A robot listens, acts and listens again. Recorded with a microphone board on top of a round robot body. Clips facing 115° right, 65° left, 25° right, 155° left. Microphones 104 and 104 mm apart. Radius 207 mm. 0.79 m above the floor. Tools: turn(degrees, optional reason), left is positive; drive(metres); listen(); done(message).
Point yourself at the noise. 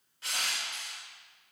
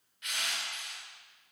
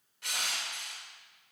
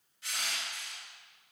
turn(degrees=-55, reason="The crushing: 55° right.")
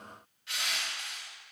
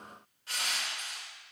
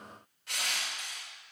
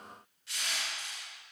turn(degrees=15, reason="The crushing is now 15° left.")
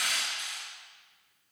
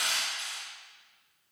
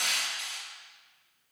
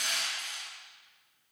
done("Facing the crushing.")